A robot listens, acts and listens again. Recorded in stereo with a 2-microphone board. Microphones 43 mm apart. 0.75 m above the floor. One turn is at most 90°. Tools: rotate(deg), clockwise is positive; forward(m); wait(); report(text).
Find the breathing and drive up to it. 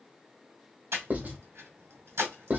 rotate(90)
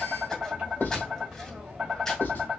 rotate(-10)
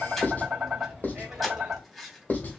forward(1.0)
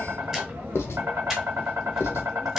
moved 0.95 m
rotate(10)
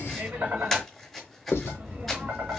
forward(1.0)
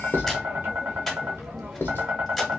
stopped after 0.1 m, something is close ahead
wait()
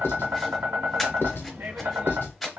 report("I am next to the breathing.")